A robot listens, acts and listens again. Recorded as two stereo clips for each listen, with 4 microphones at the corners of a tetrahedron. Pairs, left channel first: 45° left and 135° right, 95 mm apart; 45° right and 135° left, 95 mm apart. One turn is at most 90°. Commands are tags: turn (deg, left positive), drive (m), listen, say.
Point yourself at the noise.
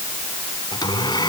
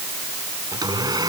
<turn deg="90"/>
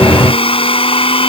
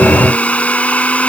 <turn deg="30"/>
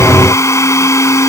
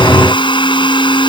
<turn deg="-15"/>
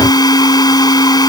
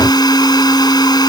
<say>Facing the blender.</say>